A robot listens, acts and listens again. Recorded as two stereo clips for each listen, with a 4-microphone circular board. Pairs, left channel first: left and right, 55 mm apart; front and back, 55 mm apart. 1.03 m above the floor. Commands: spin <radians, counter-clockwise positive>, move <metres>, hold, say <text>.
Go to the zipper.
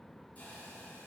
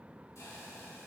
hold
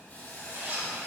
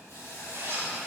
spin -2.53
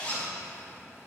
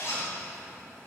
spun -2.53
spin 0.52
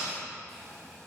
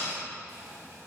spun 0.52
move 1.0
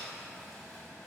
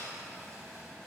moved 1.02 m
hold
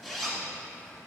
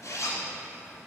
move 1.0
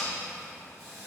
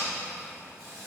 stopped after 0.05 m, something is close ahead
say Arrived at the zipper, straight ahead.